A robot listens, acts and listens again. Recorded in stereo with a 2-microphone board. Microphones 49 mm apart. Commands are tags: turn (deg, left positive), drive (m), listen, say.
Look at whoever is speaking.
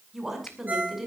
<turn deg="-30"/>
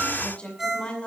<turn deg="25"/>
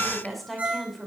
<say>Facing the woman speaking, over 4 m away.</say>